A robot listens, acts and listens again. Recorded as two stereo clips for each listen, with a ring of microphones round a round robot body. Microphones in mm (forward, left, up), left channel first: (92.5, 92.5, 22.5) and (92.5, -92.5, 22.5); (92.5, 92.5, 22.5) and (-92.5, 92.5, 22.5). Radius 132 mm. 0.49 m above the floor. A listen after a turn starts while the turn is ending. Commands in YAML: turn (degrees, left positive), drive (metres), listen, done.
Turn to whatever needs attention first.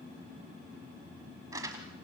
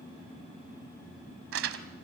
listen: true
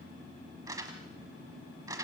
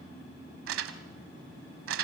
listen: true
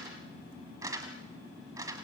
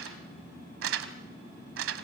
done: "I can't make out anything urgent to turn to."